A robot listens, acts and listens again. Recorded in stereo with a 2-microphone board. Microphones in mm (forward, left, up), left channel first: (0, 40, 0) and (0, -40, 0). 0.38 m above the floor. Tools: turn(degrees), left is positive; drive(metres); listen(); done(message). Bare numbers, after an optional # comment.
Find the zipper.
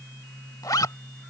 # The zipper: about 50° left or 130° left.
turn(50)
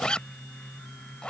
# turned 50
# So it is at 15° left.
turn(15)
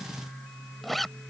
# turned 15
done("Found it: a zipper, straight ahead.")